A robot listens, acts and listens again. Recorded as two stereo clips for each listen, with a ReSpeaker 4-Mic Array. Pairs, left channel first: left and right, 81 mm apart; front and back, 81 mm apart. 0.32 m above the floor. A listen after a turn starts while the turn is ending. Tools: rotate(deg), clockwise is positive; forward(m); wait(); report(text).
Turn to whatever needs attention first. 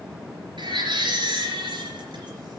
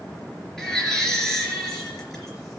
rotate(85)
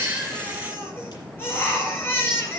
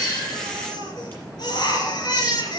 rotate(-30)
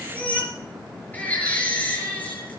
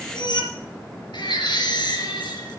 rotate(-20)
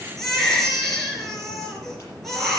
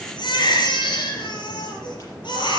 report("Facing the baby crying, 2 to 4 m away.")